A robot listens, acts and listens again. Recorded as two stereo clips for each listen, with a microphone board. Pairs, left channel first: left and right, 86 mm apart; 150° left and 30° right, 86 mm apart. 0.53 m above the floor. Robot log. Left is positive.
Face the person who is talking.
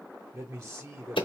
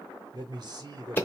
note: The man speaking: 35° right.
cmd yaw -35
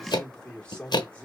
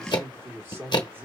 note: The man speaking is now 20° left.
cmd yaw +20
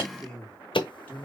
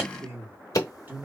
note: The man speaking is now 30° left.
cmd yaw +30
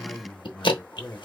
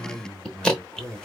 note: The man speaking is now 25° left.
cmd yaw +25
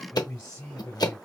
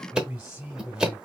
note: The man speaking is now 25° left.
cmd yaw +25
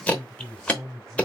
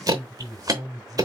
note: The man speaking is now 10° right.
cmd yaw -10
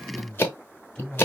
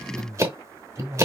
end: Facing the man speaking, 1 to 2 m away.